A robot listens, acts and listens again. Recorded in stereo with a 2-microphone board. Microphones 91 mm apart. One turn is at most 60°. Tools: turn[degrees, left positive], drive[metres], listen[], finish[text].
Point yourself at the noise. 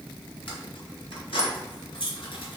Thought: The keys jangling: about 75° left or 105° left.
Action: turn[60]
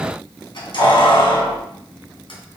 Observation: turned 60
Thought: So it is at 75° left.
Action: turn[60]
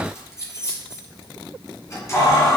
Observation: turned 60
Thought: The keys jangling is now 35° left.
Action: turn[35]
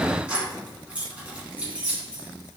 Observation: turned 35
Thought: The keys jangling is now 15° right.
Action: turn[-15]
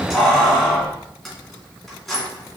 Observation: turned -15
Action: finish[Facing the keys jangling, 2 to 4 m away.]